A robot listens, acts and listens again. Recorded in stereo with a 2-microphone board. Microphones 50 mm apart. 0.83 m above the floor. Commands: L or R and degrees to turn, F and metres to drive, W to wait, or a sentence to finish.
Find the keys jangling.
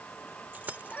R35
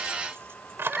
R130
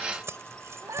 R60
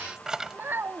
R15
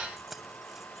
Found it: keys jangling, straight ahead.